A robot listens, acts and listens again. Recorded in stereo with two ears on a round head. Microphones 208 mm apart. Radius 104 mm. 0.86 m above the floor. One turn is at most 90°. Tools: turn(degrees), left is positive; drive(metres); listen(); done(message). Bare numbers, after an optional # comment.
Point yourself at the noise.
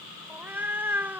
turn(-30)
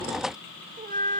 # So it is at 135° right.
turn(-90)
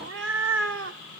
# The cat meowing is now 65° right.
turn(-65)
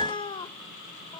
# The cat meowing is now 20° left.
turn(20)
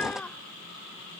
done("Found it: a cat meowing, straight ahead.")